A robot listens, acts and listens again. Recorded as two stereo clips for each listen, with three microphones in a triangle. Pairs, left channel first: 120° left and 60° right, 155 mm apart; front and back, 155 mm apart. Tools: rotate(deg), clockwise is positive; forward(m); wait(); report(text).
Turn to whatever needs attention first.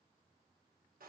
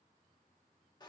wait()
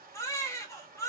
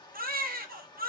rotate(170)
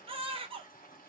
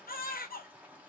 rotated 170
report("Facing the baby crying.")